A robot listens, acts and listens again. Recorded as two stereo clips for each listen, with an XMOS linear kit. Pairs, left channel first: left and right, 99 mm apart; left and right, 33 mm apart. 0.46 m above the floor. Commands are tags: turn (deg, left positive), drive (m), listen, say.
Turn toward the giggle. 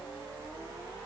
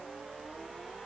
<listen/>
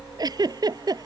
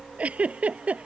<turn deg="-45"/>
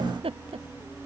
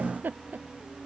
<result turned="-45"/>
<turn deg="-90"/>
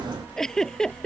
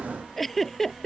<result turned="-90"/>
<say>Facing the giggle.</say>